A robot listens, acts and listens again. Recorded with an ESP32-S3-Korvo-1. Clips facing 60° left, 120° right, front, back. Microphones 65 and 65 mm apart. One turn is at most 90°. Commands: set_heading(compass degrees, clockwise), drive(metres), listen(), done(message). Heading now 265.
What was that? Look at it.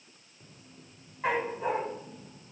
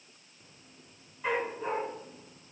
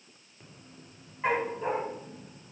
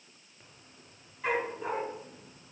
set_heading(215)
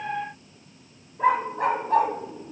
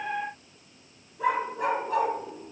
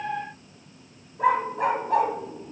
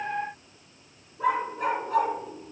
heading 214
set_heading(194)
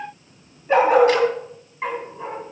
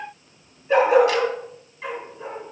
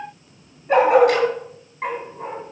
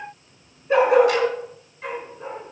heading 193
set_heading(178)
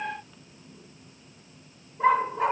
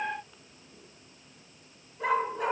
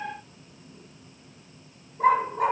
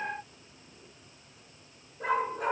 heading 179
done("Found it: a dog barking, straight ahead.")